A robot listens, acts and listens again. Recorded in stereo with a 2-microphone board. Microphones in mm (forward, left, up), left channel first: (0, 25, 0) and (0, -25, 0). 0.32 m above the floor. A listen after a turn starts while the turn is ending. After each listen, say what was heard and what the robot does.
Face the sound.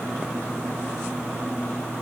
Keep listening.
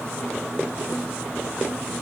Keep listening.
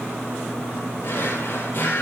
The drawer: about 45° left or 135° left. Turn 45° left.
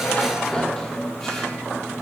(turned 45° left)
Keep listening.
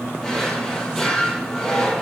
Found it: a drawer, straight ahead, over 4 m away.